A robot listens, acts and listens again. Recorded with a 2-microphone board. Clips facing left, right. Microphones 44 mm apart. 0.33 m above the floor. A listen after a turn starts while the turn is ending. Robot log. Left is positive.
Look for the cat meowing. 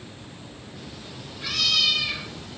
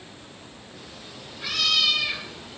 cmd yaw -30
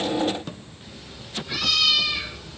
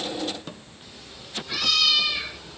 cmd yaw +30
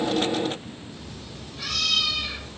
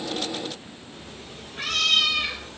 note: So it is at 50° right.
cmd yaw -50
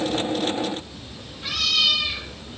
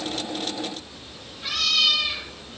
end: Found it: a cat meowing, straight ahead, 2 to 4 m away.